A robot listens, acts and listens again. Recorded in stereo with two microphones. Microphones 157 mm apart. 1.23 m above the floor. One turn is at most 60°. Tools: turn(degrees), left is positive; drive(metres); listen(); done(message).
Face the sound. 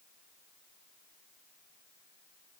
listen()
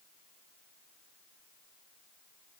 listen()
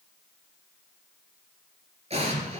turn(degrees=-45)
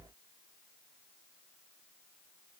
listen()
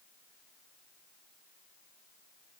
done("I heard an explosion, but can't make it out now. It was about straight ahead or 90° right.")